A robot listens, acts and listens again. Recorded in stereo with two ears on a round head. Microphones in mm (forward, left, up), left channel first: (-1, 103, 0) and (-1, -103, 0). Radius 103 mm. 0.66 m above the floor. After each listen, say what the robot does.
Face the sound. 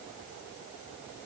Keep listening.
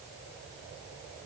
Keep listening.
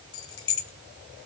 Turn 60° left.
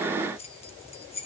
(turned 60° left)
Turn 30° left.
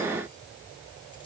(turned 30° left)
Keep listening.
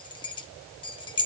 Turn 25° left.
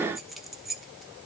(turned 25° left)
Facing the keys jangling, under 1 m away.